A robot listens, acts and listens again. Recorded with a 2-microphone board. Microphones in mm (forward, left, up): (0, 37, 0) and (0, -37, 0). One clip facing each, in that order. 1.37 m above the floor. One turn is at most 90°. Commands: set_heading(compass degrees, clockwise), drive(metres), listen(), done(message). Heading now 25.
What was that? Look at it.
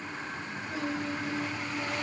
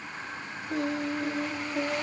set_heading(90)
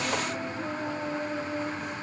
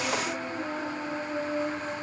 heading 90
set_heading(120)
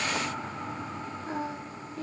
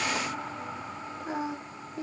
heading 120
set_heading(140)
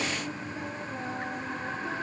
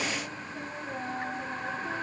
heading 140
done("Found it: singing, straight ahead.")